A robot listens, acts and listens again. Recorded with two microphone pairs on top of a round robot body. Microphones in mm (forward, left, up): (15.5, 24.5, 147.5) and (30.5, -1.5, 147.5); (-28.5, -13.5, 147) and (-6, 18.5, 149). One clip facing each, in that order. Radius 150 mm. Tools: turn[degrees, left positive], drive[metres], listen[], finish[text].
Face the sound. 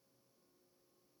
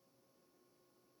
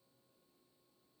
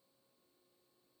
Action: listen[]
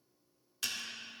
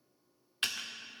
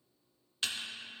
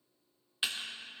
Thought: The typing on a keyboard: 15° right.
Action: turn[-15]
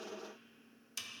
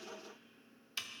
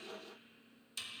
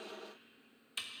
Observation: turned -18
Action: finish[Found it: typing on a keyboard, straight ahead.]